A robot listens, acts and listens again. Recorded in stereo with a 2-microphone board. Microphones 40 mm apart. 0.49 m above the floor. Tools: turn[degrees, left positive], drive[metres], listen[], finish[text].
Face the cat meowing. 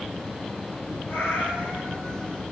Action: turn[90]
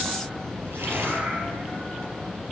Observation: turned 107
Thought: Nothing new. It was at 15° right.
Action: turn[-15]
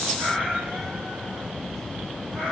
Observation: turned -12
Thought: The cat meowing is now 30° right.
Action: turn[-30]
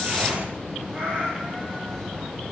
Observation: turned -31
Action: finish[Facing the cat meowing, over 4 m away.]